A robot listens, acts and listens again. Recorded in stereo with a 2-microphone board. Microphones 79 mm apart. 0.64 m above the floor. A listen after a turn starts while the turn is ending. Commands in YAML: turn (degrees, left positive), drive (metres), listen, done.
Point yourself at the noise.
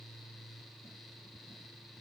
listen: true
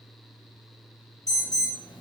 turn: 45
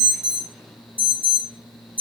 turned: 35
turn: 25
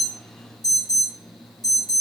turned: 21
done: "Found it: an alarm, straight ahead."